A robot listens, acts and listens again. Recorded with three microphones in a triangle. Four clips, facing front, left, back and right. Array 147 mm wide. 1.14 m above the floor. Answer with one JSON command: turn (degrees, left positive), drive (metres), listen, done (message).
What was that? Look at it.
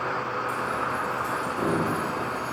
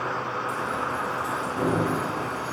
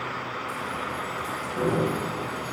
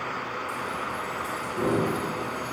{"turn": 105}
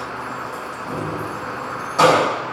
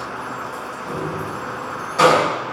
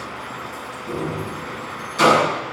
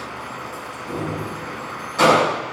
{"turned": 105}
{"done": "Facing the keys jangling."}